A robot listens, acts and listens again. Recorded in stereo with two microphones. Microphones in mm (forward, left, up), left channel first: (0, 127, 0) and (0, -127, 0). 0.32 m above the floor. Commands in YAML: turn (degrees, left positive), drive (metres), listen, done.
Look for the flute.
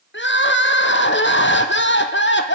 listen: true
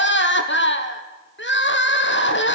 listen: true
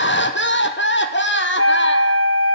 turn: 60
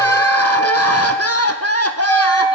turn: 15
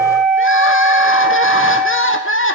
done: "Facing the flute."